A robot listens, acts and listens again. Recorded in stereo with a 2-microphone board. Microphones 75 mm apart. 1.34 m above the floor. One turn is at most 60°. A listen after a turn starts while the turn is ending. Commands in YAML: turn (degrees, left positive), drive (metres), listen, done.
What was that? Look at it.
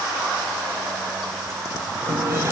turn: -35
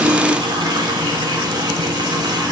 turn: -60
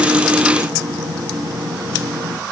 turn: -55
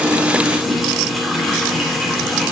done: "Facing the running tap."